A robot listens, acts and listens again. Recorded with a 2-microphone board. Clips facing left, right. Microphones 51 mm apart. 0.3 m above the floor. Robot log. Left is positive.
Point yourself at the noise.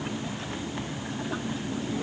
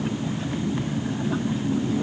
cmd idle
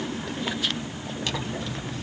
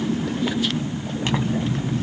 note: The zipper: about 35° right or 145° right.
cmd yaw -35
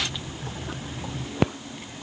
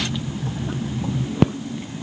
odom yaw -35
end: Facing the zipper, under 1 m away.